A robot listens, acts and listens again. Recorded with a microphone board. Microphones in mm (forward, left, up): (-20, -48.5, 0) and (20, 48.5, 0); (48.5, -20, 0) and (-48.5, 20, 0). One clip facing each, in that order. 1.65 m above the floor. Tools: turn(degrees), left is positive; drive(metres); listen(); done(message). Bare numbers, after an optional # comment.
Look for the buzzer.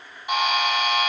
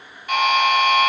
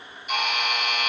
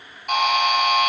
# The buzzer: straight behind.
turn(180)
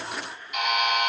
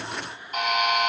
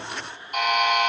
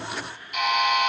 # The buzzer is now 20° left.
turn(20)
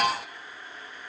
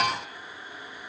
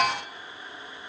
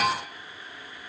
done("Found it: a buzzer, straight ahead.")